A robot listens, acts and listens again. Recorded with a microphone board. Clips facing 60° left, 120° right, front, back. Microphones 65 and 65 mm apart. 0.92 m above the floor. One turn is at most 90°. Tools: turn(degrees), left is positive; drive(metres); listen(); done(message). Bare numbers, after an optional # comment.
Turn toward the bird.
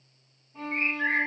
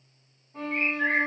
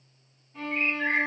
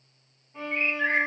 # The bird: 170° right.
turn(-90)
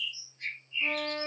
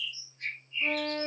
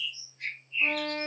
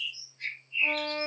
# The bird is now 85° right.
turn(-85)
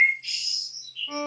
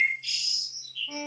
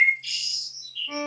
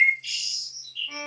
# The bird is now 15° left.
turn(15)
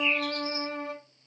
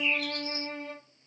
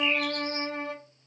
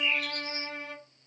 listen()
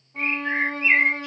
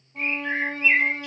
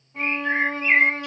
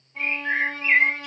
done("Facing the bird.")